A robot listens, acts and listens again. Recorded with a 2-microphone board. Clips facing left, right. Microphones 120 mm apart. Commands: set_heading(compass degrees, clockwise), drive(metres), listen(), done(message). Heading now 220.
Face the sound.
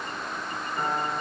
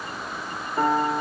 set_heading(290)
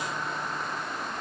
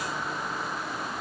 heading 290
listen()
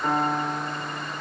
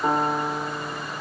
set_heading(325)
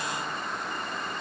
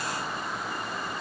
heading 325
listen()
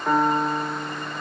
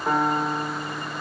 set_heading(335)
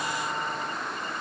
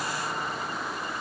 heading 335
listen()
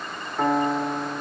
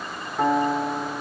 done("Facing the piano, 1 to 2 m away.")